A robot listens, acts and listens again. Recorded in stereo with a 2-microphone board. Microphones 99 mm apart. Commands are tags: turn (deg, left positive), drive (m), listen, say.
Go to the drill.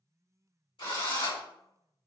<turn deg="60"/>
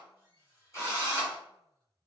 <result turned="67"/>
<turn deg="35"/>
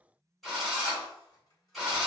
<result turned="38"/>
<drive m="1.0"/>
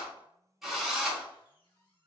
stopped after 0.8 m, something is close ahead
<say>Arrived at the drill, straight ahead.</say>